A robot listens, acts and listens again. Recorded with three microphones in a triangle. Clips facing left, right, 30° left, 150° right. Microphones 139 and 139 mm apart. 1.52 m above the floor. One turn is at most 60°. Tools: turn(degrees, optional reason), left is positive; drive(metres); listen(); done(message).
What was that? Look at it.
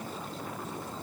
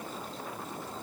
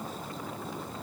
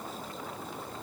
listen()
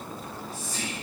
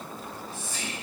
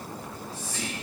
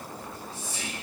turn(degrees=60, reason="The whispering: 145° left.")
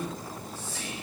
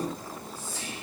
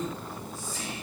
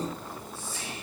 turn(degrees=60, reason="The whispering is now 80° left.")
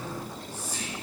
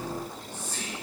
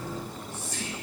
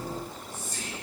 turn(degrees=10, reason="The whispering is now 10° left.")
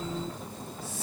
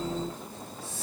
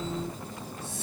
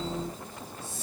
listen()
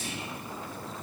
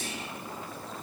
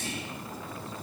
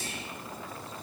done("Facing the whispering.")